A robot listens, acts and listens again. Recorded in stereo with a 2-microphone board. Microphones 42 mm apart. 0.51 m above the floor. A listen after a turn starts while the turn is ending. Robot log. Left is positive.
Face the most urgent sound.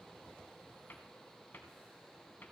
cmd idle
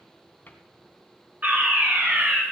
note: The fire alarm: about 40° right or 140° right.
cmd yaw -40
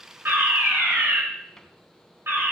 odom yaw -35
note: So it is at 95° right.
cmd yaw -95
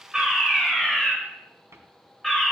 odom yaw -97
end: Facing the fire alarm.